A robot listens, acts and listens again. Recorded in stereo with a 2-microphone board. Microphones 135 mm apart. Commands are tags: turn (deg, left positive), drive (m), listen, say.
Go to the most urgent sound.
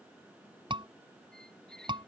<turn deg="-40"/>
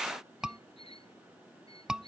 <drive m="1.0"/>
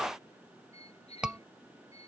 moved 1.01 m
<drive m="1.0"/>
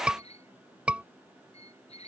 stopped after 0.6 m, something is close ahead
<turn deg="-15"/>
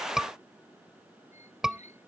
<say>I am next to the scream.</say>